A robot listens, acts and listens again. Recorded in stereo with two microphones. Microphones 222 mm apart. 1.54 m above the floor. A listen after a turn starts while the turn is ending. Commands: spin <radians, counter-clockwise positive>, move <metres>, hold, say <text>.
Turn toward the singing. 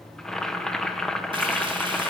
hold
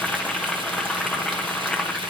hold
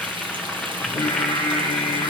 spin 0.52
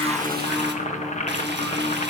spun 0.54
say Found it: singing, straight ahead.